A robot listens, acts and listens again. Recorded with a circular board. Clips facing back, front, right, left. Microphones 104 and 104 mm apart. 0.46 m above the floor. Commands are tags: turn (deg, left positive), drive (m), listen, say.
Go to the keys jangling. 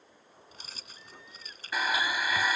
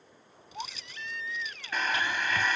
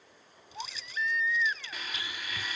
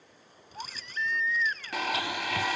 <turn deg="135"/>
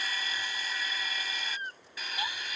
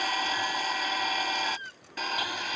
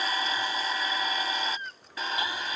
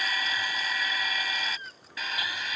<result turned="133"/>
<listen/>
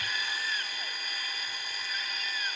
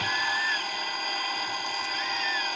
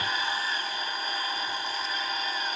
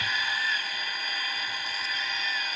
<listen/>
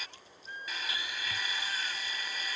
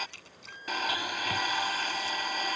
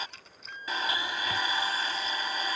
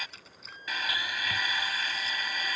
<drive m="1.0"/>
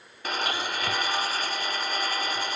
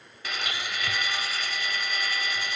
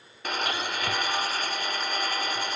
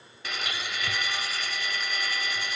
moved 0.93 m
<listen/>
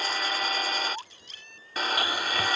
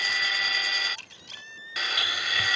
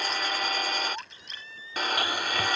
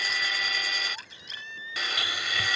<listen/>
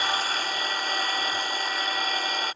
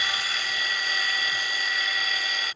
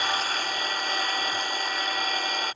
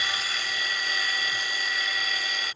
<say>I heard keys jangling from this way, but can't make it out now. I did not reach it.</say>